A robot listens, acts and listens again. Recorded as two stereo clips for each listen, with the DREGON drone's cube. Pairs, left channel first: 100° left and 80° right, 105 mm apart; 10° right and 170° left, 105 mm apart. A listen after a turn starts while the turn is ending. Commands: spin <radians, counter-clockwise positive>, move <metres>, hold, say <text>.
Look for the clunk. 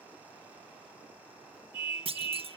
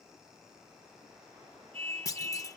spin -1.22
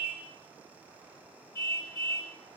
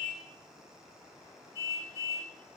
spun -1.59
spin 0.44
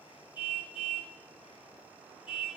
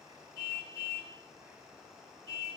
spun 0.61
spin -0.17
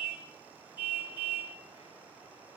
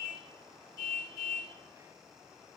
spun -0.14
say I heard a clunk from this way, but can't make it out now.